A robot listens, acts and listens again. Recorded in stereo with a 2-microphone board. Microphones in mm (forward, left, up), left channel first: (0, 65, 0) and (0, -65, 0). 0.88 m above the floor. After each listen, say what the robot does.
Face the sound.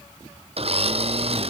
Turn 50° right.
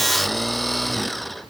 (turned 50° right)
Found it: a blender, straight ahead.